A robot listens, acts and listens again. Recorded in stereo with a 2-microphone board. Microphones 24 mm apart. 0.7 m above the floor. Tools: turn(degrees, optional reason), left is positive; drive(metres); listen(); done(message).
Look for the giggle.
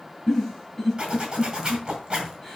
turn(degrees=30)
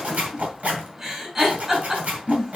turn(degrees=-20, reason="So it is at 20° right.")
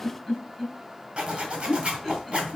done("Facing the giggle.")